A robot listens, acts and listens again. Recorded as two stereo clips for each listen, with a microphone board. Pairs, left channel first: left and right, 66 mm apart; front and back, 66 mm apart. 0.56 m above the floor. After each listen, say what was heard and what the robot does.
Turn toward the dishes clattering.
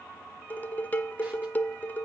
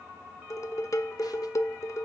The dishes clattering: 30° left. Turn 30° left.
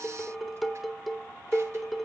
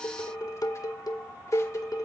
Facing the dishes clattering.